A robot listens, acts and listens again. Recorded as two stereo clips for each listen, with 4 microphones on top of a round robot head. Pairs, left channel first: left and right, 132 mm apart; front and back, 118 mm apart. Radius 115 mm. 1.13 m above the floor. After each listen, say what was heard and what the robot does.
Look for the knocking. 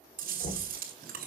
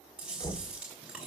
The knocking: 65° left. Turn 65° left.
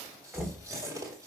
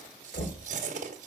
Found it: knocking, straight ahead.